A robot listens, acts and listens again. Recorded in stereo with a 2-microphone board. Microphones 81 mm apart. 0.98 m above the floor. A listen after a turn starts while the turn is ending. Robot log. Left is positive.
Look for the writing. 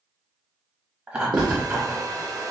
note: The writing: about 70° right or 110° right.
cmd yaw -70
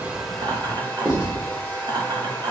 note: So it is at 15° right.
cmd yaw -15
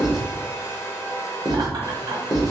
end: Facing the writing, 1 to 2 m away.